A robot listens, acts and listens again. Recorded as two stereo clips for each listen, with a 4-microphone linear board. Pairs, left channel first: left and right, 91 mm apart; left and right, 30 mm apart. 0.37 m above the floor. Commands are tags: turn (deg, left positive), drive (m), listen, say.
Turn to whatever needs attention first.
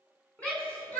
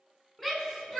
<turn deg="30"/>
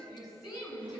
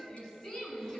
<turn deg="140"/>
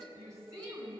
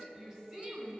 <turn deg="-35"/>
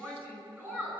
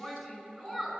<turn deg="-20"/>
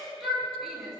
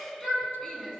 <say>Facing the shout, over 4 m away.</say>